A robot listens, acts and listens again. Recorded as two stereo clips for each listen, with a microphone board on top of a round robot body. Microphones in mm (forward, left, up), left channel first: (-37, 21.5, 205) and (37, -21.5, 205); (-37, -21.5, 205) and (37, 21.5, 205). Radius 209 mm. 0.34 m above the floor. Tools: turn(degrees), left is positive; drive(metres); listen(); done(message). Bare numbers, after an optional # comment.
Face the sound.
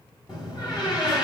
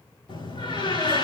# The door slam: 175° right.
turn(-175)
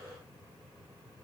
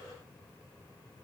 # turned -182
# Nothing new. It was at 10° left.
turn(10)
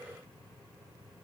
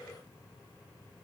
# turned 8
done("Facing where the door slam came from. I can't hear it now.")